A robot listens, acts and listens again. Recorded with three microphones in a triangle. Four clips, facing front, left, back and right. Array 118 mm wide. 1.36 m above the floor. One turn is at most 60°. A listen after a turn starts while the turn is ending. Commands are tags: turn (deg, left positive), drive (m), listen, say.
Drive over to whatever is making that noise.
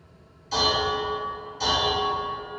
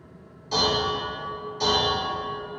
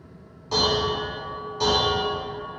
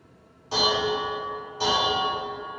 <turn deg="-60"/>
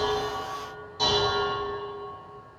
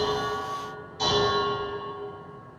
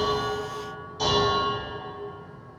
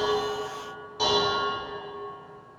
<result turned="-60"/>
<turn deg="-60"/>
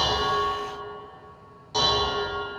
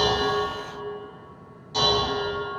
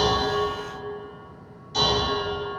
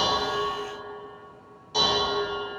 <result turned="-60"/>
<turn deg="-20"/>
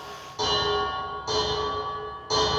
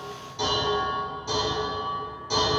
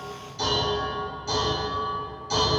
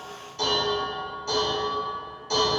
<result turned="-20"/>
<drive m="1.0"/>
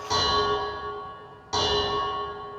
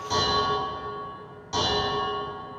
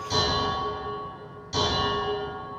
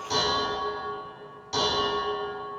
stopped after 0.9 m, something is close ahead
<say>I am next to the dishes clattering.</say>